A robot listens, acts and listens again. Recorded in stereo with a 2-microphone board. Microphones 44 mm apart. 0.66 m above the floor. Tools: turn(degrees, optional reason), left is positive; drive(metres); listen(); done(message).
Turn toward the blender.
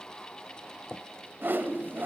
listen()
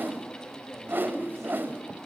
listen()
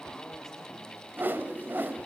done("I can't make out a blender to turn to.")